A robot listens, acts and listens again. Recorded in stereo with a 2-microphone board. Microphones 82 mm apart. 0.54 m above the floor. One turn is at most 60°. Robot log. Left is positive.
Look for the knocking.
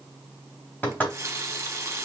note: The knocking: about 15° left or 165° left.
cmd yaw +15
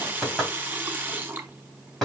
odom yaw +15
end: Facing the knocking.